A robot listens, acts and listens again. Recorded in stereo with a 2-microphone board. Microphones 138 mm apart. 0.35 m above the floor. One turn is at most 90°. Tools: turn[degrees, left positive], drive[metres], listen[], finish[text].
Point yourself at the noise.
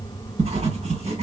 Thought: The writing: about 55° right or 125° right.
Action: turn[-55]
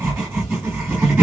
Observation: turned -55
Thought: So it is at 15° right.
Action: turn[-15]
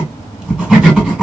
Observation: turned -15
Action: finish[Facing the writing, 1 to 2 m away.]